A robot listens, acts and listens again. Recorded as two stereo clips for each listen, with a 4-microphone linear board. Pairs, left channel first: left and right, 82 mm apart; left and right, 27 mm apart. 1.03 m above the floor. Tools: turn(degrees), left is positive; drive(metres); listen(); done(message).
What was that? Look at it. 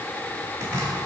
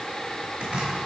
turn(degrees=-60)
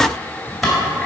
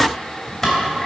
done("Facing the chopping, 2 to 4 m away.")